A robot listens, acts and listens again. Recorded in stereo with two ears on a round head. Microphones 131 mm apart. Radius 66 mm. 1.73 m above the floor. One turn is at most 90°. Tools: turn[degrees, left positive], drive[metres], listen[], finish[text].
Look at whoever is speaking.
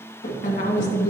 Thought: The woman speaking: about 55° left or 125° left.
Action: turn[55]
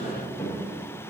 Action: listen[]
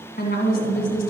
Thought: So it is at 65° left.
Action: turn[65]
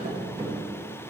Action: listen[]
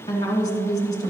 Thought: The woman speaking is now 30° left.
Action: turn[30]
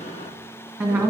Thought: The woman speaking is now 20° right.
Action: turn[-20]
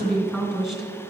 Action: finish[Facing the woman speaking.]